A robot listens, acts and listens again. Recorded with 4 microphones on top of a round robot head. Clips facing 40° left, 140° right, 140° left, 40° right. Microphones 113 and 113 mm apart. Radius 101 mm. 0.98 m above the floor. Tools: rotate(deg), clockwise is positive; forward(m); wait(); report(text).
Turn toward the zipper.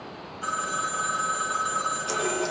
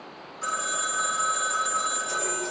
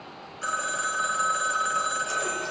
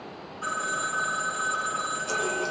wait()
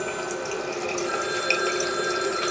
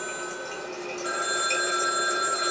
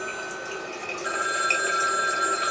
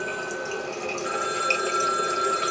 wait()
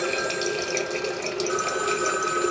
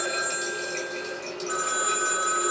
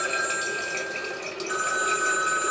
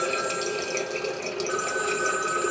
report("I can't make out a zipper, only a running tap and a phone ringing.")